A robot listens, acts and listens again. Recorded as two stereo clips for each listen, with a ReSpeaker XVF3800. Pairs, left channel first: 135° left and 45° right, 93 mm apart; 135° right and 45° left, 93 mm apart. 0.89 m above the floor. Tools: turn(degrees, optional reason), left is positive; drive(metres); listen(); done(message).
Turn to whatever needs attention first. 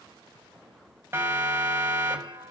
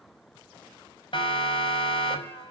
turn(degrees=-110, reason="The siren: 110° right.")
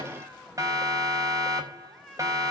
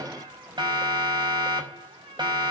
done("Facing the siren.")